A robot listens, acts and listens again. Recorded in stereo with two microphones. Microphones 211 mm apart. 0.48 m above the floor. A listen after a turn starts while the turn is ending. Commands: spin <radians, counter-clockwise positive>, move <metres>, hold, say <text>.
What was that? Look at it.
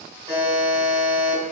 spin -0.52
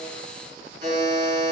spin -2.09
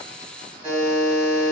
spin -0.52
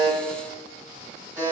spin -0.26
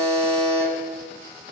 say Facing the buzzer.